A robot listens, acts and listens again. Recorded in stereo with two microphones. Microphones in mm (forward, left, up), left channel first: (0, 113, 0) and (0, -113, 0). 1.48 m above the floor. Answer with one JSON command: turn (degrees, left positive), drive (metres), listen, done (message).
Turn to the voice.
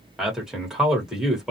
{"turn": -30}
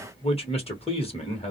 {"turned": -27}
{"turn": 30}
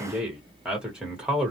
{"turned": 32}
{"done": "Found it: a man speaking, straight ahead."}